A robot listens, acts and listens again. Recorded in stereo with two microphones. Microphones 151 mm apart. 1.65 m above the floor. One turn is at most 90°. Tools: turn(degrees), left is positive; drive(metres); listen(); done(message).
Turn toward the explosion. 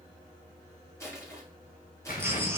turn(degrees=70)
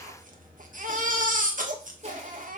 listen()
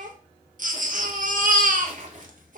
done("I heard an explosion, but can't make it out now. It was about straight ahead or 40° left.")